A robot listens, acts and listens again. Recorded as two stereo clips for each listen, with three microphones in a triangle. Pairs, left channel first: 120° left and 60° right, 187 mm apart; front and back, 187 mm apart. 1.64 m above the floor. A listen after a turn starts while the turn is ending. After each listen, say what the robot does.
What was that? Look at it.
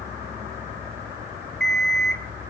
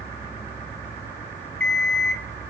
Turn 85° right.
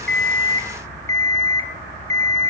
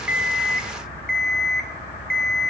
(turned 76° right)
Found it: an alarm clock, straight ahead, 2 to 4 m away.